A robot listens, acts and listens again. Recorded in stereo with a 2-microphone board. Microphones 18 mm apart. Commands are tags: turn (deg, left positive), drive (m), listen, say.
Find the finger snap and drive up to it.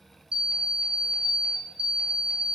<listen/>
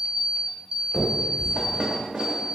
<turn deg="-30"/>
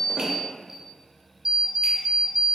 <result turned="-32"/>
<listen/>
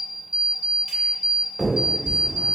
<turn deg="-140"/>
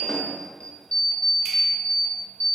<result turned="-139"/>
<listen/>
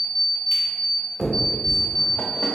<drive m="1.0"/>
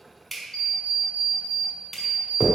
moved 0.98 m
<drive m="1.0"/>
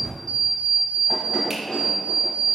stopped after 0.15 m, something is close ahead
<say>Arrived at the finger snap, straight ahead.</say>